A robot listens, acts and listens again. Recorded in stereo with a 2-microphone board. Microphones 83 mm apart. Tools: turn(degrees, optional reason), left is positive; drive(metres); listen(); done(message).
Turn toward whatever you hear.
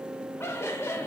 turn(degrees=30, reason="The laughter: about 30° left or 150° left.")
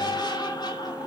turn(degrees=125, reason="So it is at 125° left.")
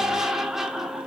done("Found it: laughter, straight ahead, 2 to 4 m away.")